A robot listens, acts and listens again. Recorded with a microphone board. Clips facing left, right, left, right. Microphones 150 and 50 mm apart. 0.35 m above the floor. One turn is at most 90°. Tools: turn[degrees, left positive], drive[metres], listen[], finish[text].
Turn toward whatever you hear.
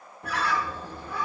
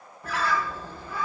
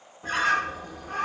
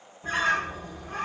Thought: The bird: about 65° left or 115° left.
Action: turn[65]
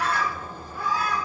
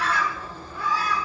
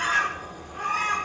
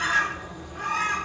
Thought: So it is at 50° left.
Action: turn[50]
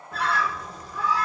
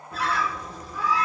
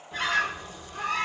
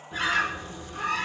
Action: finish[Found it: a bird, straight ahead.]